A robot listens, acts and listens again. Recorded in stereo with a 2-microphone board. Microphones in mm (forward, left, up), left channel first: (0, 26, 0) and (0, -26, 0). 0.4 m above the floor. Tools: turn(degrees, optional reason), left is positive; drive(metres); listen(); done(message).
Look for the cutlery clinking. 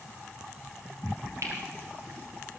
turn(degrees=-60, reason="The cutlery clinking: about 60° right or 120° right.")
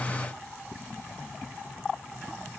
listen()
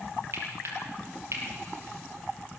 turn(degrees=-60, reason="So it is at 60° right.")
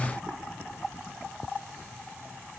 listen()
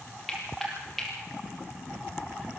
done("Facing the cutlery clinking.")